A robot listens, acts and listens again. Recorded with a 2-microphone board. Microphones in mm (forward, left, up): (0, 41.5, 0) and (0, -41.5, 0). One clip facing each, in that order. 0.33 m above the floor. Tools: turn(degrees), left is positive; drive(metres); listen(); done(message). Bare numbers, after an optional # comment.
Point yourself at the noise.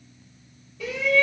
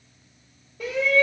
# The shout: about 40° right or 140° right.
turn(-40)
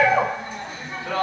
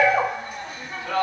# So it is at 10° right.
turn(-10)
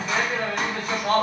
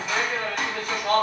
done("Found it: a shout, straight ahead, 1 to 2 m away.")